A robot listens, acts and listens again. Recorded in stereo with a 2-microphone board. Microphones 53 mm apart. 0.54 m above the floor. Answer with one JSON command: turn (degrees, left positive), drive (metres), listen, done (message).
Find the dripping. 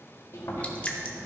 {"turn": 25}
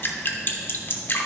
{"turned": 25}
{"turn": 125}
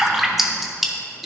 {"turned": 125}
{"done": "Facing the dripping, under 1 m away."}